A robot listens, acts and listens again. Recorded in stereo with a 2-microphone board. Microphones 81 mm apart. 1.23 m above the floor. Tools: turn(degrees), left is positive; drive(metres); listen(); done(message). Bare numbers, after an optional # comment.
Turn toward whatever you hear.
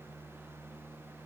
listen()
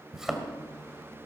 turn(-30)
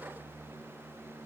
listen()
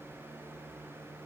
done("I heard a thud, but can't make it out now. It was about 20° left or 140° right.")